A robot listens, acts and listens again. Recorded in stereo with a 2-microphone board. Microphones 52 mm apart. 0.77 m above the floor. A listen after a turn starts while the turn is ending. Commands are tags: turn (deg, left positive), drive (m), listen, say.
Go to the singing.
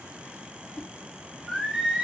<turn deg="-20"/>
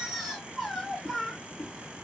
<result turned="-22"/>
<drive m="1.0"/>
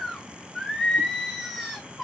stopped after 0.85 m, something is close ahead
<say>Arrived at the singing, straight ahead.</say>